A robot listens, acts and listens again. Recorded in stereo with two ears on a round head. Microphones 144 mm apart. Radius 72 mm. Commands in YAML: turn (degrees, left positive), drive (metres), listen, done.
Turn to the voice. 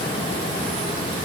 listen: true
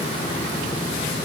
listen: true
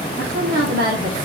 turn: -65
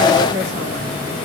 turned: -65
turn: -55
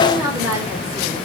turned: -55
done: "Facing the woman speaking."